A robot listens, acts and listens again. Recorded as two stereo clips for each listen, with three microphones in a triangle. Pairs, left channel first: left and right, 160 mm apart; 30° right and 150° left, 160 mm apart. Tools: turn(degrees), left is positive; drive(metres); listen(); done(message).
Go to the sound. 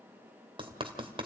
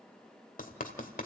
turn(degrees=-40)
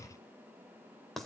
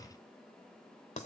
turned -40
drive(metres=1.0)
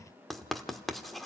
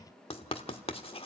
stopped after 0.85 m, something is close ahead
done("I am next to the writing.")